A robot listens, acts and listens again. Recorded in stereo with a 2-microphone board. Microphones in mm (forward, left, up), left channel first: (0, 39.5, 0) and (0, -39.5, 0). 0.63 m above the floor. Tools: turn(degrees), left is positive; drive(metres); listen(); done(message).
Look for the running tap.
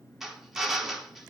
listen()
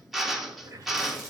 turn(degrees=-45)
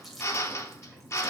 done("Found it: a running tap, straight ahead.")